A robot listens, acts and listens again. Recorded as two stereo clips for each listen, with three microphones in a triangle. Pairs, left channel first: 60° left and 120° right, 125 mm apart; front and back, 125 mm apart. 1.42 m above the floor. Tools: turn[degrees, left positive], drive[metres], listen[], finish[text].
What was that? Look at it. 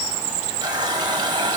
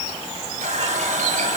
Thought: The running tap: 175° right.
Action: turn[-175]
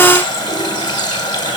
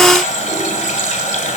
Action: finish[Found it: a running tap, straight ahead.]